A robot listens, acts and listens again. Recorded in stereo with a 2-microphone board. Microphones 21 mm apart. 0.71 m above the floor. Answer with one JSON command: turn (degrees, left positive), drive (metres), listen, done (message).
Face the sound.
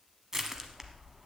{"turn": -20}
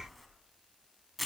{"done": "Found it: crushing, straight ahead."}